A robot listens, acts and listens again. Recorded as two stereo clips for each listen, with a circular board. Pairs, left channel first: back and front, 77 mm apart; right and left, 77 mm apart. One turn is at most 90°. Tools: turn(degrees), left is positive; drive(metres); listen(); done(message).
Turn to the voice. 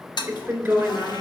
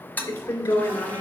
turn(degrees=-65)
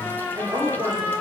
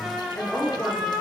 turn(degrees=-25)
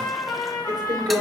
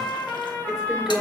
done("Found it: a woman speaking, straight ahead.")